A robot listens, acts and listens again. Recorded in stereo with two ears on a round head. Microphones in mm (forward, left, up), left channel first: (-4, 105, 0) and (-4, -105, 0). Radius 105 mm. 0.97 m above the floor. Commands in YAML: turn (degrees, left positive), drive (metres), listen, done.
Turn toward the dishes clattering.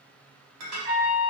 turn: -75
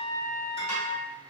listen: true
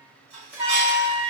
turn: -25
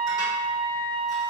listen: true
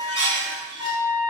turn: -15
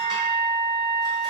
listen: true
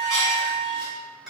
done: "Found it: dishes clattering, straight ahead, 1 to 2 m away."